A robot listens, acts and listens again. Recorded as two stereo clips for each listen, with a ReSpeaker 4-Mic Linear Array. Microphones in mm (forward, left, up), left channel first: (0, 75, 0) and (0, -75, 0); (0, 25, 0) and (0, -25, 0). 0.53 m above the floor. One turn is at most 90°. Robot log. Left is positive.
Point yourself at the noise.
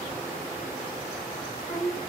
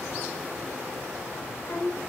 cmd yaw +90
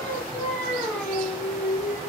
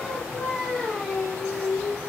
end: Found it: singing, straight ahead, over 4 m away.